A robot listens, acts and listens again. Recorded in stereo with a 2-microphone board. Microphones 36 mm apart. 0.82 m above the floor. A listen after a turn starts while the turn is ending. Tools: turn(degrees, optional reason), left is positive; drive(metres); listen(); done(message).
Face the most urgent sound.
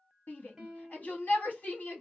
turn(degrees=60, reason="The shout: about 60° left or 120° left.")
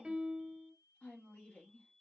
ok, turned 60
turn(degrees=50, reason="So it is at 50° left.")
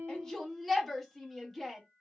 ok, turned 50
done("Facing the shout.")